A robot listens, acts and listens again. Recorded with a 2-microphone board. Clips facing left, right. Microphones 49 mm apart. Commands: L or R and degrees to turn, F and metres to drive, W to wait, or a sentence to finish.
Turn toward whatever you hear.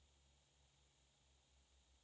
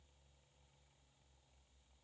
W
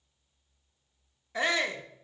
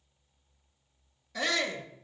L25
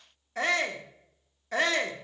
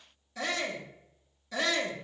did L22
L125
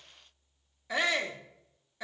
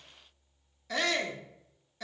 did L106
L15
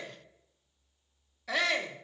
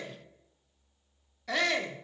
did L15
Found it: a shout, straight ahead.